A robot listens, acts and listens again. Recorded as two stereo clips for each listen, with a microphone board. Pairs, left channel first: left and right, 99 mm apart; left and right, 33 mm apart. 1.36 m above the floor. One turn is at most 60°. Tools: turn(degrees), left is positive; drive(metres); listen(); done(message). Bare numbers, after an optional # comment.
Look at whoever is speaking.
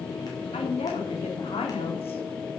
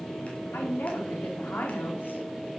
turn(60)
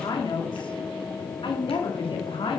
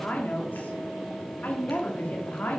# So it is at 65° left.
turn(60)
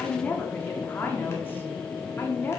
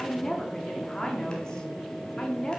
# The woman speaking is now 20° left.
turn(20)
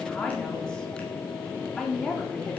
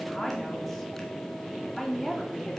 # The woman speaking is now 10° left.
turn(10)
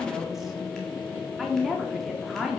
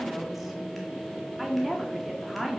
done("Facing the woman speaking, 2 to 4 m away.")